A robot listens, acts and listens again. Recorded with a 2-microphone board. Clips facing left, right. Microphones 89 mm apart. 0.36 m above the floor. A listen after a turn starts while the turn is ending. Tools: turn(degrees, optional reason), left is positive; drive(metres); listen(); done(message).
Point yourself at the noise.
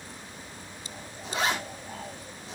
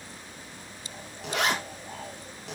turn(degrees=-90)
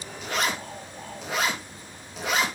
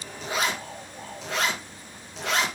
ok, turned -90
done("Found it: a zipper, straight ahead.")